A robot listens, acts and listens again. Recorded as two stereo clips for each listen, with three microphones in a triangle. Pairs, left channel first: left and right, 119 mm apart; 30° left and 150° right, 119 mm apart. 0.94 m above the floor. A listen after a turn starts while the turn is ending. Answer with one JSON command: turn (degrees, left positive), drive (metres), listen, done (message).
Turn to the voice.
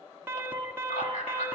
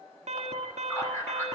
{"turn": 95}
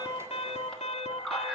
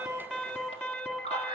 {"done": "Found it: a man speaking, straight ahead."}